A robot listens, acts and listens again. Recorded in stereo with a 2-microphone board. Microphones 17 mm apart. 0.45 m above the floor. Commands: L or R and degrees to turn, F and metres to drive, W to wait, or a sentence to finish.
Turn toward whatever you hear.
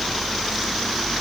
W
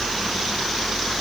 W
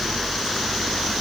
I can't make out anything to turn to.